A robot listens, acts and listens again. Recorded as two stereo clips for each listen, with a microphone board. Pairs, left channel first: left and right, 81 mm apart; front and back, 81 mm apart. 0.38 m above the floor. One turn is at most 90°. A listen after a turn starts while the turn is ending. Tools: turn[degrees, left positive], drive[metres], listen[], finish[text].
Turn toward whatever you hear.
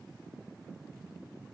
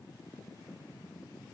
Action: listen[]
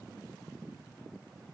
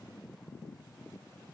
Action: listen[]
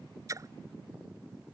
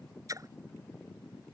Thought: The splash: 135° right.
Action: turn[-90]
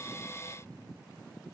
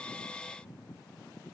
Thought: Nothing new. It was at 45° right.
Action: turn[-45]
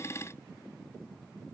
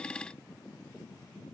Action: finish[I heard a splash from this way, but can't make it out now.]